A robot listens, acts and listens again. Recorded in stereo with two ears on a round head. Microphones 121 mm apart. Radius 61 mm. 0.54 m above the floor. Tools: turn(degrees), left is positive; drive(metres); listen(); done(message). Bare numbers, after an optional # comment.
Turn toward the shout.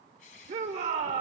# The shout: about 55° right or 125° right.
turn(-55)
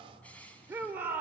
# So it is at 20° right.
turn(-20)
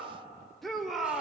done("Facing the shout, 1 to 2 m away.")